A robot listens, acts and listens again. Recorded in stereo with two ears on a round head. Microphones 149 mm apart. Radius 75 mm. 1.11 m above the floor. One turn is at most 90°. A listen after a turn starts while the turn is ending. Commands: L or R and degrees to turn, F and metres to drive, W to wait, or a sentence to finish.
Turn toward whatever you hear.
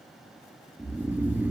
R30
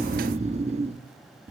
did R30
R90
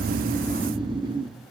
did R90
R30
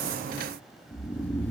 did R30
L10
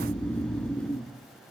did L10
Found it: snoring, straight ahead, 1 to 2 m away.